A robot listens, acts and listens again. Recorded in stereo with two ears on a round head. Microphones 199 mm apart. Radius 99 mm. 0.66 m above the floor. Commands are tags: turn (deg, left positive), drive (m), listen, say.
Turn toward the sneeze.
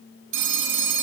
<listen/>
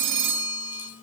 <listen/>
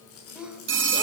<turn deg="-30"/>
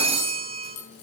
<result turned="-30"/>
<listen/>
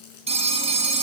<say>I heard a sneeze, but can't make it out now. It was about 25° left or 145° right.</say>